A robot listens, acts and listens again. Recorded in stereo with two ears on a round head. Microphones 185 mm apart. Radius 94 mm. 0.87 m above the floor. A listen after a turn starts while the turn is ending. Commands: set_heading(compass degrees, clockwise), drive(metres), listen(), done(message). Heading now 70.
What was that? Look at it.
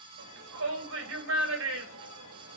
set_heading(145)
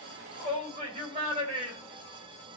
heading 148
set_heading(173)
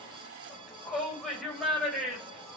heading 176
done("Facing the shout.")